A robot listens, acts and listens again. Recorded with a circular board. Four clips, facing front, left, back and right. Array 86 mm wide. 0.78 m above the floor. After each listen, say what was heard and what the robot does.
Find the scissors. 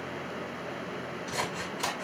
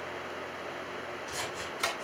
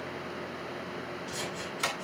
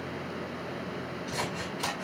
The scissors: 45° right. Turn 45° right.
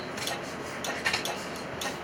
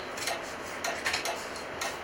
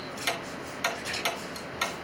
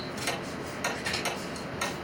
The scissors is now 10° left. Turn 10° left.
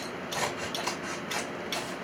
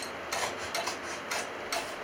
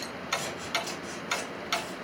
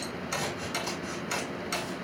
Found it: scissors, straight ahead, over 4 m away.